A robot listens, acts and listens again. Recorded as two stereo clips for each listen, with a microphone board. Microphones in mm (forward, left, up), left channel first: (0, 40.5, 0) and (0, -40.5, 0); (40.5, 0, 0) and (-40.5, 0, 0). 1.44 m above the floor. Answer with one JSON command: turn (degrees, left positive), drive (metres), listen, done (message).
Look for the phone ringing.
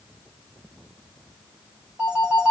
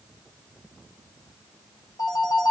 {"turn": -15}
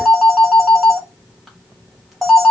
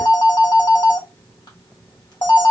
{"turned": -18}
{"done": "Facing the phone ringing, 1 to 2 m away."}